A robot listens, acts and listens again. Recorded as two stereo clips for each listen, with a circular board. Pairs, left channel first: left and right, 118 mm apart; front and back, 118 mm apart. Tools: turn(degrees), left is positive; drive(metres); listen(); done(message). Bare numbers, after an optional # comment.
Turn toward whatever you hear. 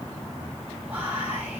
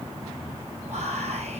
# The whispering: 165° right.
turn(-165)
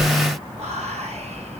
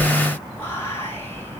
# The whispering is now 70° right.
turn(-70)
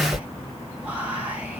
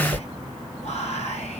# The whispering is now 10° right.
turn(-10)
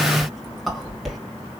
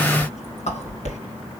done("Facing the whispering, 2 to 4 m away.")